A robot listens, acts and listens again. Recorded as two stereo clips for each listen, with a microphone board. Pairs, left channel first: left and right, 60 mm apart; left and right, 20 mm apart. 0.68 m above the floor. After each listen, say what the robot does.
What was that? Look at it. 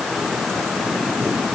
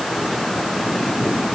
Keep listening.
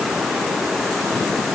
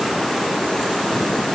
Keep listening.
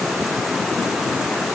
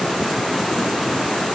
I can't make out anything to turn to.